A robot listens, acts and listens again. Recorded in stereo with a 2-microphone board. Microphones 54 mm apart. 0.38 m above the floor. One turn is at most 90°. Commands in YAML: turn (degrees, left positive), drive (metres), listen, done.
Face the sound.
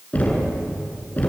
turn: 30
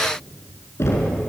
turn: 90
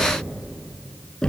turn: 15
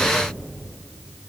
listen: true
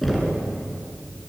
done: "Facing the knocking, over 4 m away."